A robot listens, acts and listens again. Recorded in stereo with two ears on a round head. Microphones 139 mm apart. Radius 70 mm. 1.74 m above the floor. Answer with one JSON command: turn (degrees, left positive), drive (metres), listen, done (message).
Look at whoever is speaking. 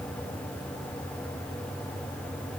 {"listen": true}
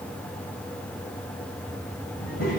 {"turn": 55}
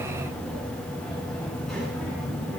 {"done": "Facing the child speaking, over 4 m away."}